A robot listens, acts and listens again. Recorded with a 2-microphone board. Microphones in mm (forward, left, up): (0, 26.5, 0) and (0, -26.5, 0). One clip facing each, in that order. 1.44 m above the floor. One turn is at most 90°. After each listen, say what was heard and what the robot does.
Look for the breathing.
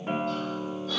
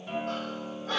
The breathing: about 45° right or 135° right. Turn 45° right.
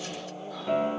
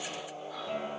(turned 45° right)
Keep listening.
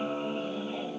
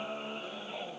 Keep listening.
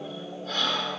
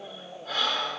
So it is at 10° right. Turn 10° right.
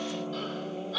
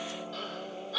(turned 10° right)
Facing the breathing.